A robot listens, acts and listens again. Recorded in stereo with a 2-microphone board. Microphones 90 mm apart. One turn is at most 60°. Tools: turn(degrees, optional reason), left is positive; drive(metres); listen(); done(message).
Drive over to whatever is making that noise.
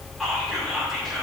turn(degrees=30)
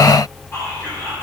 turn(degrees=60, reason="So it is at 150° left.")
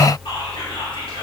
turn(degrees=60, reason="The whispering is now 80° left.")
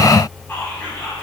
turn(degrees=30, reason="The whispering is now 30° left.")
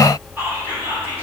turn(degrees=-25, reason="The whispering is now 25° right.")
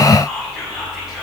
drive(metres=1.0)
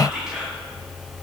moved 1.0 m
turn(degrees=-10, reason="The whispering is now 10° right.")
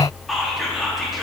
drive(metres=1.0)
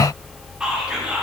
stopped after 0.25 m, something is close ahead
turn(degrees=-10, reason="The whispering is now 10° right.")
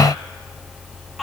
done("Arrived at the whispering, straight ahead.")